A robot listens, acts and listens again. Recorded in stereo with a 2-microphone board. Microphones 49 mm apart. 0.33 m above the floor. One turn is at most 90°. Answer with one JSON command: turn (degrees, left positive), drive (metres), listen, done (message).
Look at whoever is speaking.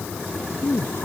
{"turn": 55}
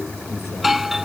{"listen": true}
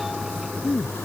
{"turn": 70}
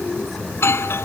{"listen": true}
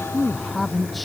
{"done": "Facing the man speaking."}